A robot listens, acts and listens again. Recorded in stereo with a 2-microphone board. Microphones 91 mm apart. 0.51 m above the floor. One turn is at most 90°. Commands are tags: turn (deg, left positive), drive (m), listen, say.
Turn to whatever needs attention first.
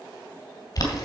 <listen/>
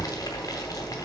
<listen/>
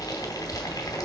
<say>I can't make out anything urgent to turn to.</say>